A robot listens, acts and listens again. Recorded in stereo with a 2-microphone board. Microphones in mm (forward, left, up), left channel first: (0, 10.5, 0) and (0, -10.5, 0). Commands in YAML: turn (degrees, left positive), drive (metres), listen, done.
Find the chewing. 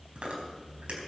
turn: -90
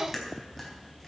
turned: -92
done: "Found it: chewing, straight ahead."